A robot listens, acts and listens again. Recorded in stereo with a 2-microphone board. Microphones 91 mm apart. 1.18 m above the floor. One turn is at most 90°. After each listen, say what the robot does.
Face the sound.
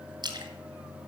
Turn 55° right.
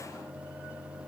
Keep listening.
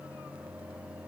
I heard a splash, but can't make it out now. It was about straight ahead or 70° right.